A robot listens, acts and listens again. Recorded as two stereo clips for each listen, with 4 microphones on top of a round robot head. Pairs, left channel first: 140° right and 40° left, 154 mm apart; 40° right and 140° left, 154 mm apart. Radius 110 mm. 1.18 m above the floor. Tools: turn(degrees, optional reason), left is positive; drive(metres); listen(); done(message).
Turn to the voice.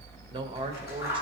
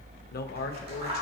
turn(degrees=-15, reason="The man speaking: 15° right.")
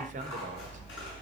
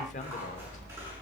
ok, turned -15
done("Found it: a man speaking, straight ahead, 1 to 2 m away.")